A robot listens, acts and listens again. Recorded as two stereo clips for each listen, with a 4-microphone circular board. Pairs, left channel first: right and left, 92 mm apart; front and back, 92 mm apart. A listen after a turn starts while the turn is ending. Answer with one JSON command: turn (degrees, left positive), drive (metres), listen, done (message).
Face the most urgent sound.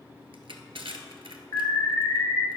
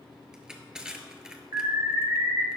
{"turn": -135}
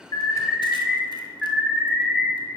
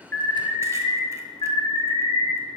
{"done": "Facing the alarm."}